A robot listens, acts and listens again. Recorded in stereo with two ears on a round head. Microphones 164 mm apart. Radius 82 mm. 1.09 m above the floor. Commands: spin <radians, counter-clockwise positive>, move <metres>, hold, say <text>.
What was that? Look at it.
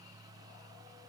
hold
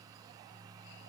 hold
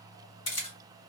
spin 0.70
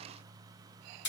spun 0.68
spin 1.66
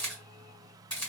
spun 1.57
say Facing the camera shutter.